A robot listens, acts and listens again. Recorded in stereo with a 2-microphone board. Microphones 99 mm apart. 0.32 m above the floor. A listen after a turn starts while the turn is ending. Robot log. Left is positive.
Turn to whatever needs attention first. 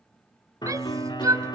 note: The shout: about 35° right or 145° right.
cmd yaw -35
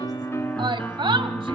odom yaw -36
note: So it is at 105° right.
cmd yaw -105
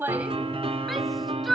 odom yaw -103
end: Found it: a shout, straight ahead, 1 to 2 m away.